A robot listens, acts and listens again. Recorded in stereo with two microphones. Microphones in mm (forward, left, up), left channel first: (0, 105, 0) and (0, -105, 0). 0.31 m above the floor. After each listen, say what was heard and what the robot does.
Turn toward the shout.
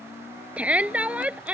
Turn 30° right.
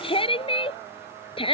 So it is at 25° left. Turn 25° left.
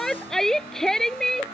Facing the shout.